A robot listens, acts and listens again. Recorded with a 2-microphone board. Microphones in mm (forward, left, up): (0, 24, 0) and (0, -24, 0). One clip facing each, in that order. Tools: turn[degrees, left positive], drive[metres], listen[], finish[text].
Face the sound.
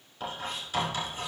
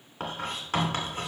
Thought: The writing: about 60° right or 120° right.
Action: turn[-60]
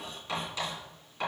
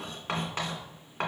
Thought: So it is at 50° right.
Action: turn[-50]
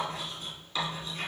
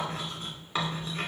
Thought: The writing is now 35° right.
Action: turn[-35]
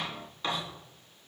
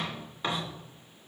Thought: The writing is now 15° right.
Action: turn[-15]
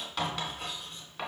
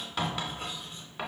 Action: finish[Facing the writing, 2 to 4 m away.]